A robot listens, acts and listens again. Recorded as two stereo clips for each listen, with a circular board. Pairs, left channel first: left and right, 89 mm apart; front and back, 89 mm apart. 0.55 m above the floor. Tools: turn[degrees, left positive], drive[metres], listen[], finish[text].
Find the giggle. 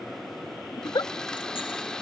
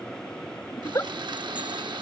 Thought: The giggle: 50° left.
Action: turn[50]
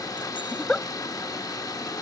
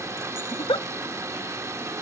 Thought: The giggle is now 10° left.
Action: turn[10]
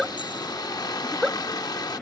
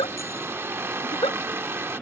Action: finish[Facing the giggle.]